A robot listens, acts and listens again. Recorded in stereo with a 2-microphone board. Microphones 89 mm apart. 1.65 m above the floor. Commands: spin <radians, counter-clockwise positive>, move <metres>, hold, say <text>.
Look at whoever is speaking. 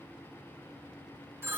hold
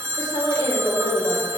spin 1.22
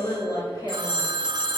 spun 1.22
spin 0.79
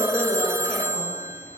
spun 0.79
spin 0.17
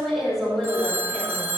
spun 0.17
say Found it: a woman speaking, straight ahead, over 4 m away.